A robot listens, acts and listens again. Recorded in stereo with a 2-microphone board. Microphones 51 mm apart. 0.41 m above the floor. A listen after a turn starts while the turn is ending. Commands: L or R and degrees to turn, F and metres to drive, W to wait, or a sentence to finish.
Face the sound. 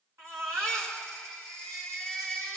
R70
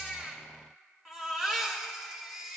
R10
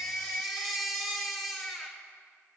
Found it: a baby crying, straight ahead.